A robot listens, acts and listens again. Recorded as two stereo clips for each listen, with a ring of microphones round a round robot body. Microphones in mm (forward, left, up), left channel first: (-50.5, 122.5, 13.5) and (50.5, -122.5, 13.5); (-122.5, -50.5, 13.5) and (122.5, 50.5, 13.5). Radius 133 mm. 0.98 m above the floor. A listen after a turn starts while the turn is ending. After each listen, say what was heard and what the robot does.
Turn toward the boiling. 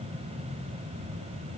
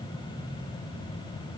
Keep listening.
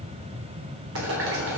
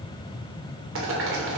The boiling: 25° right. Turn 25° right.
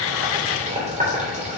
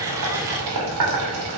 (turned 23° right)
Found it: boiling, straight ahead, 2 to 4 m away.